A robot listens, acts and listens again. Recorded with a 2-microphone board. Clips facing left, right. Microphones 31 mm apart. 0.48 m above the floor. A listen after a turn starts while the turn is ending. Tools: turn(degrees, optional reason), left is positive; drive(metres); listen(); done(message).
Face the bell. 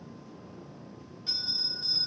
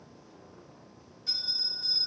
turn(degrees=30, reason="The bell: about 30° left or 150° left.")
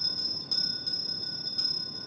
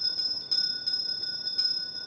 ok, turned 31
done("Facing the bell.")